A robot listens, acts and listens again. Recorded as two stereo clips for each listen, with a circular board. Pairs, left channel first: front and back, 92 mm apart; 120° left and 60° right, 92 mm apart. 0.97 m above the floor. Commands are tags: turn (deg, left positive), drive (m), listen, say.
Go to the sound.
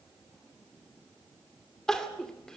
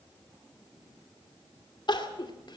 <turn deg="85"/>
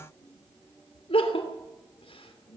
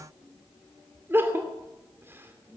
<drive m="1.0"/>
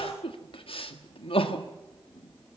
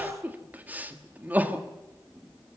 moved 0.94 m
<turn deg="10"/>
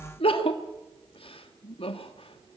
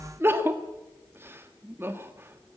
<drive m="1.0"/>
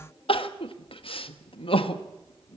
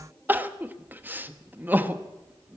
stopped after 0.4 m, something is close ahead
<turn deg="10"/>
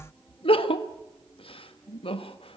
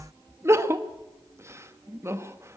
<say>Arrived at the crying, straight ahead.</say>